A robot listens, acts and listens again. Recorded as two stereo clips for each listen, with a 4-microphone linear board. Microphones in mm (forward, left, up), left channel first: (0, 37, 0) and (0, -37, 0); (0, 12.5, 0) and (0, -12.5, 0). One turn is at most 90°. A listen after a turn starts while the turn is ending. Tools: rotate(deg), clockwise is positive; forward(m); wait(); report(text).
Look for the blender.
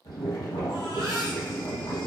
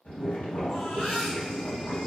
wait()
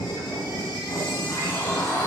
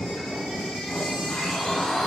rotate(-40)
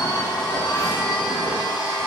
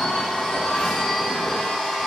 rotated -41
rotate(-90)
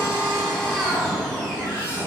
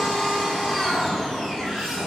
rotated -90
report("Found it: a blender, straight ahead, under 1 m away.")